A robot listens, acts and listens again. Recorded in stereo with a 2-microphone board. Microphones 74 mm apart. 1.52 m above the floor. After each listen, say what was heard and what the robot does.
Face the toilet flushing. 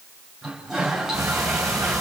Turn 30° right.
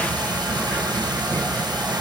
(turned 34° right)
Keep listening.
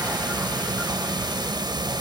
Keep listening.
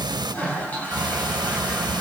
So it is at 25° left. Turn 25° left.
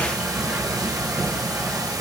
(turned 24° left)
Keep listening.
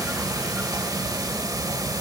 Keep listening.
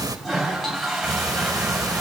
Facing the toilet flushing, over 4 m away.